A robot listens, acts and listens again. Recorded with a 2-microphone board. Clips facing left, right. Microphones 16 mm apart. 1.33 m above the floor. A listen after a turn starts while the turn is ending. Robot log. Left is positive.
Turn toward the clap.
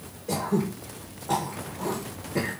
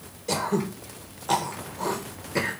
cmd idle
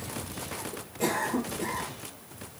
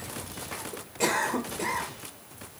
cmd idle
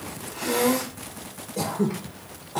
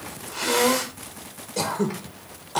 end: I can't make out a clap, only throat clearing.